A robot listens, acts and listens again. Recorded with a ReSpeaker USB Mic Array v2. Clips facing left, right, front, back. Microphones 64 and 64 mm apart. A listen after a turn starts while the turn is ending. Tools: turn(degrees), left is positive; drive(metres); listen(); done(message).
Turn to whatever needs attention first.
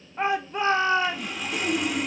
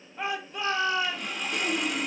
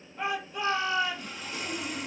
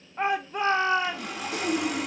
turn(degrees=140)
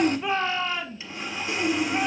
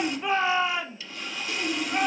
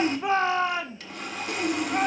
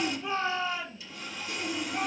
turn(degrees=-15)
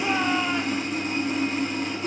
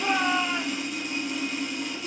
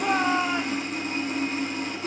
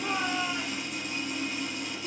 done("Found it: a shout, straight ahead.")